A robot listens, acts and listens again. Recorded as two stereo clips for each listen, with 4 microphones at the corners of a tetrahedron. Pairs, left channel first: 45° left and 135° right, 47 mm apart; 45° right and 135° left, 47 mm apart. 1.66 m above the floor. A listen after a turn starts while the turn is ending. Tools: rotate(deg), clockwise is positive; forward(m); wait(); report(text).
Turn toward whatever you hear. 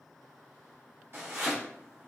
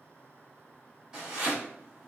rotate(150)
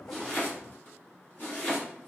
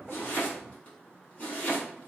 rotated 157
report("Found it: chopping, straight ahead, 1 to 2 m away.")